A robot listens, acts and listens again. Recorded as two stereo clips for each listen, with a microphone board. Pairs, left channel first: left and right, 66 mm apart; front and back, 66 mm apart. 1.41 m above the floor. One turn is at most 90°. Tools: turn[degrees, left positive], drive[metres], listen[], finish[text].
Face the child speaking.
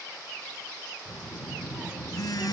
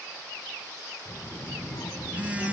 Thought: The child speaking: 20° right.
Action: turn[-20]
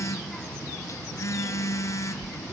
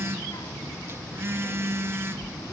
Thought: The child speaking is now 15° left.
Action: turn[15]
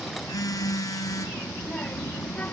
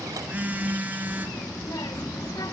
Thought: The child speaking is now 20° left.
Action: turn[20]
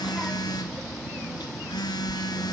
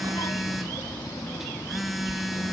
Action: finish[Found it: a child speaking, straight ahead, 1 to 2 m away.]